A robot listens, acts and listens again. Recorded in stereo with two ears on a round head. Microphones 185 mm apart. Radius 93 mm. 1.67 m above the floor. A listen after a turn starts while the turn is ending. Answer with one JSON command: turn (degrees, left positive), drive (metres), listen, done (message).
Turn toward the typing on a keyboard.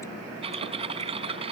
{"turn": -30}
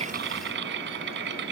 {"turn": -120}
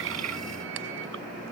{"listen": true}
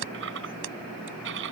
{"turn": -60}
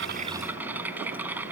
{"turn": -10}
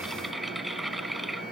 {"done": "Found it: typing on a keyboard, straight ahead."}